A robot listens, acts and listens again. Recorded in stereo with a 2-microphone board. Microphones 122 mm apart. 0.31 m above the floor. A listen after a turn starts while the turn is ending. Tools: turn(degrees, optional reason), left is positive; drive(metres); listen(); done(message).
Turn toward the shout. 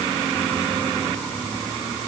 listen()
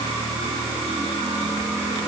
listen()
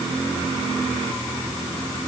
done("I can't make out a shout.")